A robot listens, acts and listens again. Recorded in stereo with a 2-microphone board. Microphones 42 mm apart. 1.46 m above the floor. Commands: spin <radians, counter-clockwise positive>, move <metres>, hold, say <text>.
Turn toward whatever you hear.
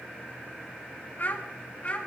spin 0.61
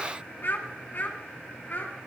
spin 0.70
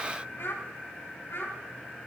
spin 2.01
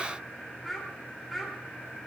say Found it: a child speaking, straight ahead.